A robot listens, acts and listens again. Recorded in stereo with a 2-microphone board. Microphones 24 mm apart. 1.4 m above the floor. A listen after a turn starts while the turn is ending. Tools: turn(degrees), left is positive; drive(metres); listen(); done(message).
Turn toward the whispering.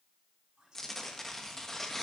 turn(degrees=-30)
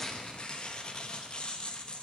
listen()
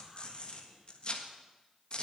listen()
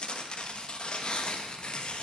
done("I heard whispering, but can't make it out now. It was about straight ahead or 120° right.")